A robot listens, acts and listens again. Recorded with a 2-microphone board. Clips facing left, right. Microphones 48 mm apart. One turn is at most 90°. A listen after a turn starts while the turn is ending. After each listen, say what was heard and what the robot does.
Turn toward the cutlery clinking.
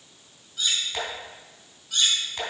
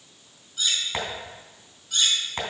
Turn 30° left.
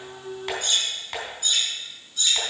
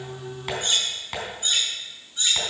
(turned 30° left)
So it is at 25° right. Turn 25° right.
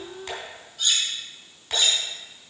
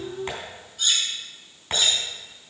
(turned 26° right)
Facing the cutlery clinking, 2 to 4 m away.